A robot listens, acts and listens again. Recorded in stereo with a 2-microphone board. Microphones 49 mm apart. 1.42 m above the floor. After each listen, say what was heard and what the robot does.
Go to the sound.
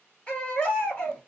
The baby crying: about 25° left or 155° left. Turn 25° left.
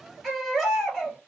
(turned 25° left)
Drive 1.0 m forward.
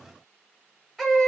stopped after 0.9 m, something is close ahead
I am next to the baby crying.